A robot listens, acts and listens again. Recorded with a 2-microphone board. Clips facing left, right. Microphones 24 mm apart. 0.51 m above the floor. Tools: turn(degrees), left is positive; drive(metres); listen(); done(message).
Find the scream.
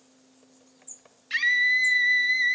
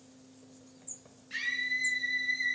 turn(degrees=60)
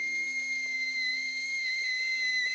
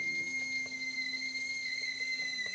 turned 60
turn(degrees=50)
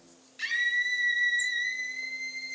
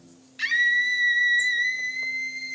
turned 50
turn(degrees=-30)
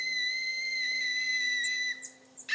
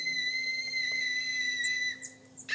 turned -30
turn(degrees=10)
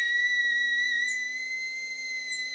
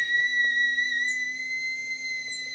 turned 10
done("Facing the scream.")